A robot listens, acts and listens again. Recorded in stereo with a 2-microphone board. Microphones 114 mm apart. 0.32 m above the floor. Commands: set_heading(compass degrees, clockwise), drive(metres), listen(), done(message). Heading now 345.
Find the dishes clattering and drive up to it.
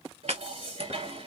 set_heading(55)
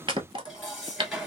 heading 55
drive(1.0)
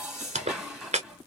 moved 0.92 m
drive(1.0)
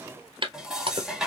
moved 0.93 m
drive(1.0)
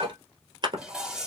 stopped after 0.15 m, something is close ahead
set_heading(65)
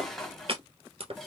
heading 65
done("I am next to the dishes clattering.")